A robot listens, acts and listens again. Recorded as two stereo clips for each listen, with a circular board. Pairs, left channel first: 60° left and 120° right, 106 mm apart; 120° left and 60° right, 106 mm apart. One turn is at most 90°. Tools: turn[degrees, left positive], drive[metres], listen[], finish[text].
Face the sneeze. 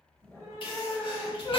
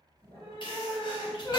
Thought: The sneeze: 85° left.
Action: turn[85]
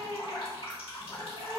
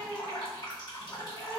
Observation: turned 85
Action: finish[Facing where the sneeze came from. I can't hear it now.]